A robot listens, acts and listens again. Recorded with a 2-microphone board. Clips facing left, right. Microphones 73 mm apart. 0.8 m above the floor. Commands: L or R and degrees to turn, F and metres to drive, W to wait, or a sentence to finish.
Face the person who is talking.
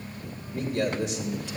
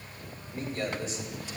L70
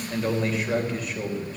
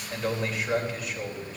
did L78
Found it: a man speaking, straight ahead, 2 to 4 m away.